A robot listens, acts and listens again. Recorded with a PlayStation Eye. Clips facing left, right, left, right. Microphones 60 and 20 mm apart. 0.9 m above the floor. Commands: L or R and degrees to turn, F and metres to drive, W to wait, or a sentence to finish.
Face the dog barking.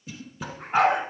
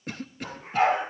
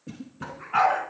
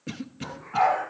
L75
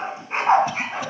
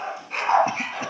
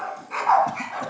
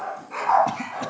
L25
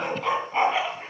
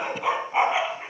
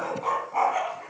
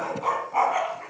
R10
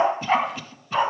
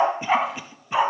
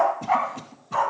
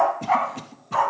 Found it: a dog barking, straight ahead, 2 to 4 m away.